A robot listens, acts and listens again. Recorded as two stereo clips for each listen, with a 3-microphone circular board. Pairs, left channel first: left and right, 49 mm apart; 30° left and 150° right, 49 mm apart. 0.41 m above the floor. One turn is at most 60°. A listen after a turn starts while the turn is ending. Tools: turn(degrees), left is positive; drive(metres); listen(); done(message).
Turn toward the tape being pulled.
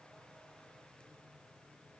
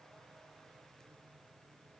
listen()
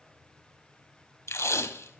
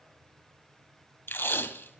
turn(degrees=60)
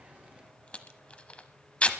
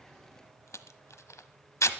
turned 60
turn(degrees=25)
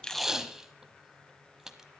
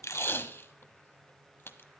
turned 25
turn(degrees=-10)
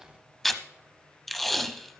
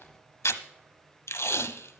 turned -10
done("Found it: tape being pulled, straight ahead, under 1 m away.")